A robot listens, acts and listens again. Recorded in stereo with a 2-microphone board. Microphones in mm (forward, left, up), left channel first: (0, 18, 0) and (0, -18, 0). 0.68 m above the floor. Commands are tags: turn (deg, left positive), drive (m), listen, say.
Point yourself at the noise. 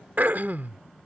<turn deg="-60"/>
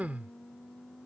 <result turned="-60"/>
<turn deg="-55"/>
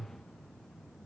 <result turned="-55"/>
<turn deg="-15"/>
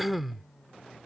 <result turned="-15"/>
<say>Facing the throat clearing.</say>